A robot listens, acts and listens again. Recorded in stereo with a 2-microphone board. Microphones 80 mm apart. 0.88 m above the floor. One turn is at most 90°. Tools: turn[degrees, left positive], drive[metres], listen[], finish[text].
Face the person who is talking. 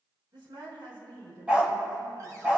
Action: turn[-90]
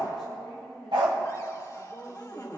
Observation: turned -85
Action: finish[Facing the woman speaking.]